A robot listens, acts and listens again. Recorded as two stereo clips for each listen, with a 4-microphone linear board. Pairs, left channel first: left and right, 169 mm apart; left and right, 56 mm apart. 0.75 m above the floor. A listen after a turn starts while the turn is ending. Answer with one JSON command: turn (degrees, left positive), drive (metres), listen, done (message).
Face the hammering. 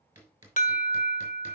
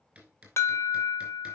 {"turn": -15}
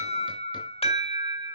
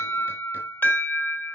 {"listen": true}
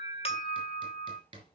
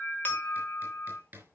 {"turn": -150}
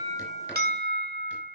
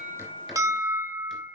{"listen": true}
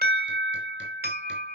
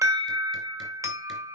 {"listen": true}
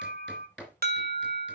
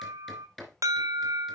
{"done": "Found it: hammering, straight ahead."}